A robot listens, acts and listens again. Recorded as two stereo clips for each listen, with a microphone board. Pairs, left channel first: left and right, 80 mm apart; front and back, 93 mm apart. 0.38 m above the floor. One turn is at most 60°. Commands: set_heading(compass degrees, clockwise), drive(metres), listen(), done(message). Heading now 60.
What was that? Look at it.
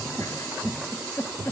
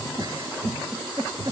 set_heading(0)
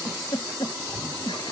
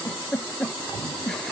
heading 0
set_heading(300)
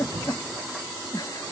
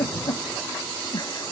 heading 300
set_heading(250)
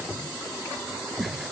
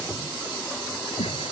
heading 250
listen()
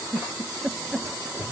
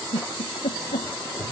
done("Facing the giggle.")